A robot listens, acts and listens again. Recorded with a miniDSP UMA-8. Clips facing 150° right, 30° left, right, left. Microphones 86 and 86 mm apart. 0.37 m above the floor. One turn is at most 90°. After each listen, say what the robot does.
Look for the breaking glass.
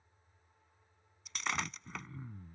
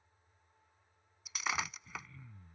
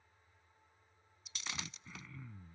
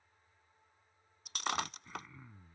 Turn 90° left.
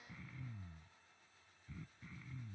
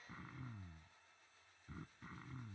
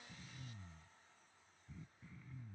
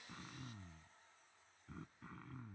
Turn 25° left.
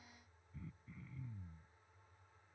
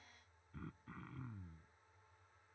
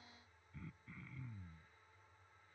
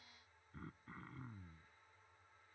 Facing where the breaking glass came from. I can't hear it now.